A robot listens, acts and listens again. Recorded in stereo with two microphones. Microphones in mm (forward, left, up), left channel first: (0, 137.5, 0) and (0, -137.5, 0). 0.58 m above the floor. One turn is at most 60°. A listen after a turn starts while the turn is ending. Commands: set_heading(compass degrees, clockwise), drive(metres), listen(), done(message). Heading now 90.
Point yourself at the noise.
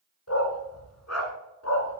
set_heading(30)
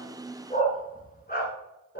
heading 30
set_heading(350)
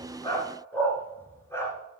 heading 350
set_heading(340)
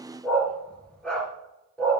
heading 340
done("Found it: a dog barking, straight ahead, 2 to 4 m away.")